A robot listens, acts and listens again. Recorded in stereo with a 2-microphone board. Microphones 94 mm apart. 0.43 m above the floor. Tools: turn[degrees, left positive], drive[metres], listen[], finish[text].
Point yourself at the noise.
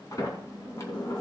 Thought: The sliding door: about 35° left or 145° left.
Action: turn[35]
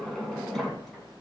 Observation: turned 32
Action: finish[Facing the sliding door.]